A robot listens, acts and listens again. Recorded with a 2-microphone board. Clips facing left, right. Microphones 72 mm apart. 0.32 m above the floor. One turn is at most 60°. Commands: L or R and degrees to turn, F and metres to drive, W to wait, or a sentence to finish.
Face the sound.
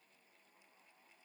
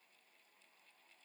W
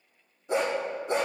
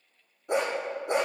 R60
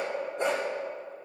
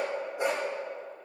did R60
Found it: a dog barking, straight ahead.